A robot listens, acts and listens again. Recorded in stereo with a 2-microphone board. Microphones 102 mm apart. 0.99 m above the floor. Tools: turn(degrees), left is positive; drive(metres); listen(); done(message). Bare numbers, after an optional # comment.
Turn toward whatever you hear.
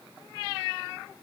listen()
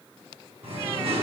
# The singing: about 75° right or 105° right.
turn(-75)
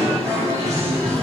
# So it is at 30° right.
turn(-30)
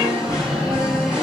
done("Found it: singing, straight ahead, over 4 m away.")